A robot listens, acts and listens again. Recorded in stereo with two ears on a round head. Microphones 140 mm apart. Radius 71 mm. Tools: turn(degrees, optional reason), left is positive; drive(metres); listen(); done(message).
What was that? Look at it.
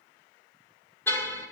turn(degrees=15, reason="The car horn: about 15° left or 165° left.")
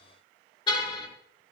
turn(degrees=150, reason="So it is at 150° left.")
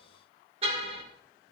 turn(degrees=-40, reason="The car horn is now 40° right.")
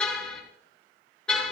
done("Found it: a car horn, straight ahead, over 4 m away.")